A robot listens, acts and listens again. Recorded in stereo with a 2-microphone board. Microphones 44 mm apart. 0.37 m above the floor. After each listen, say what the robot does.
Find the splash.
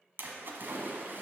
Turn 55° right.
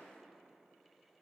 Keep listening.
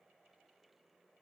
I heard a splash, but can't make it out now. It was about straight ahead or 70° right.